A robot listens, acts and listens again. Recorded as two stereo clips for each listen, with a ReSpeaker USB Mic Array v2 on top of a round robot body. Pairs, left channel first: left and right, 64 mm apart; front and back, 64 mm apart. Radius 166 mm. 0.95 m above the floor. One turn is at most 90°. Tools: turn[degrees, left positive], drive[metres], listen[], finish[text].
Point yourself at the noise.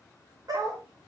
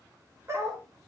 Thought: The dog barking: 130° right.
Action: turn[-90]
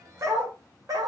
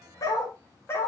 Thought: The dog barking is now 60° right.
Action: turn[-60]
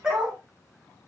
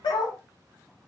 Thought: The dog barking is now 15° right.
Action: turn[-15]
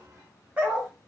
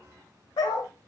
Thought: The dog barking is now 20° right.
Action: turn[-20]
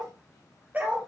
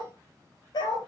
Thought: The dog barking is now 20° right.
Action: turn[-20]
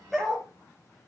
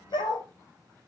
Action: finish[Found it: a dog barking, straight ahead, 2 to 4 m away.]